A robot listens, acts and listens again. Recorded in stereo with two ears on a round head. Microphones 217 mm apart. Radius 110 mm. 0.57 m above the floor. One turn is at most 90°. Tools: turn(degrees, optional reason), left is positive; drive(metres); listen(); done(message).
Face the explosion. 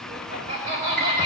listen()
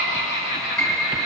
listen()
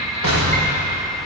turn(degrees=-65, reason="The explosion: about 65° right or 115° right.")
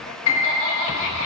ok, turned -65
listen()
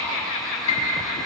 done("I heard an explosion, but can't make it out now. It was about straight ahead or 50° right.")